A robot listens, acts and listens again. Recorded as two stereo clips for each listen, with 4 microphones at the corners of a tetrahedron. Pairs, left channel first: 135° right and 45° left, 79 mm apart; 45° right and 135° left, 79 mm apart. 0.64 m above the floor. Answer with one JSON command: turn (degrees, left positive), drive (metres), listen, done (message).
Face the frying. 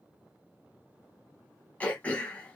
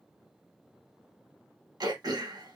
{"listen": true}
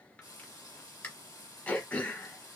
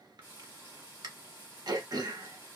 {"turn": -165}
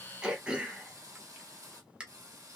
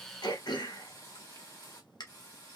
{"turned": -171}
{"turn": 10}
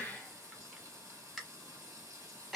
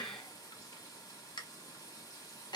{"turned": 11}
{"done": "Facing the frying."}